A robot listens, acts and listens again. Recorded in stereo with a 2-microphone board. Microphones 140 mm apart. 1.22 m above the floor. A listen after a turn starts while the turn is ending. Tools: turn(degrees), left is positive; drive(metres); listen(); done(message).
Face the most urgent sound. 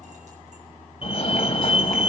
turn(degrees=40)
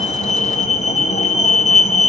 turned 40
turn(degrees=90)
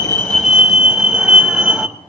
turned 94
done("Found it: a fire alarm, straight ahead, 1 to 2 m away.")